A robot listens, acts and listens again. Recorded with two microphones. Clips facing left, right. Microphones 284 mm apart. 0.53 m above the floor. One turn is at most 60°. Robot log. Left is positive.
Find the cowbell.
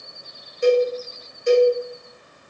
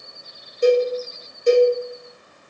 note: The cowbell: about 40° right or 140° right.
cmd yaw -40
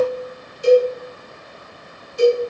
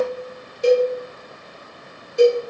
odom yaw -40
note: So it is at 100° right.
cmd yaw -60
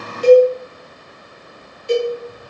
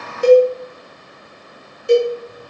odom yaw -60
note: The cowbell is now 55° right.
cmd yaw -55
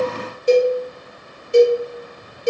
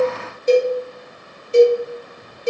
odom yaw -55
note: The cowbell is now 15° left.
cmd yaw +15
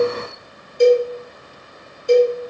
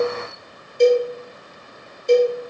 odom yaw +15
end: Found it: a cowbell, straight ahead, 1 to 2 m away.